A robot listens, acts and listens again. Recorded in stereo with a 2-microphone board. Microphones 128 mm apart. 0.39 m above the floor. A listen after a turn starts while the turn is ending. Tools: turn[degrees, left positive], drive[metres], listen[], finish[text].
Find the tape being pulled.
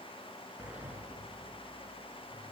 Action: listen[]
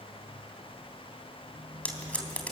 Action: turn[30]
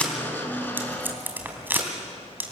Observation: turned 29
Thought: So it is at 20° right.
Action: turn[-20]
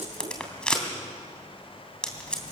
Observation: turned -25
Action: finish[Facing the tape being pulled.]